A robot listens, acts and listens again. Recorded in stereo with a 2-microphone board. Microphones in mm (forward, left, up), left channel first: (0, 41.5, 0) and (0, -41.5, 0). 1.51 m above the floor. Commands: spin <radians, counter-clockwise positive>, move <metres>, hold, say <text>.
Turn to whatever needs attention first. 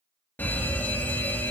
spin 0.44
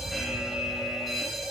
say Facing the fire alarm.